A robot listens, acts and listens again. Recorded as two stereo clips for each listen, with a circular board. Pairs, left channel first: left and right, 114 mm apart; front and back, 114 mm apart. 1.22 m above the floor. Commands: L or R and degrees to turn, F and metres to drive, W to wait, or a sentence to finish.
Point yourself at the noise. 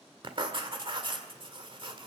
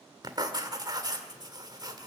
R130
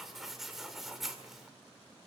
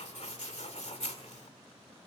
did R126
Found it: writing, straight ahead.